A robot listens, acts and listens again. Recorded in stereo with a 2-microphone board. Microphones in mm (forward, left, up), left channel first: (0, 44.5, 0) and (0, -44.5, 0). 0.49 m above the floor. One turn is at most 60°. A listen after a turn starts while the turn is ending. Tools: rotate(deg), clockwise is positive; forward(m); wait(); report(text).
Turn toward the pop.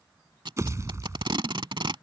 rotate(40)
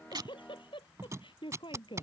wait()
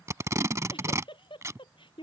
report("I heard a pop, but can't make it out now. It was about straight ahead or 100° right.")